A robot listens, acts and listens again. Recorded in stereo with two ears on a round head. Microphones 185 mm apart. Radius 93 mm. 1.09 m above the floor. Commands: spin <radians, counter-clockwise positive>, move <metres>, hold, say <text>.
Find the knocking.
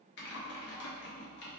hold
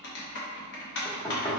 spin 0.52
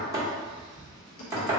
spin -0.26
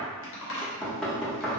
say Facing the knocking.